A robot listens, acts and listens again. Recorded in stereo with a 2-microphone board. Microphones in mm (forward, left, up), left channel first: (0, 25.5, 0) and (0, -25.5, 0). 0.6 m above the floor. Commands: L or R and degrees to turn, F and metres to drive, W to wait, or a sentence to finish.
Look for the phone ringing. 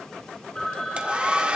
L30
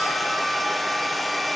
W
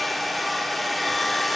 W
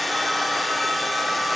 I heard a phone ringing, but can't make it out now. It was about 15° right or 135° left.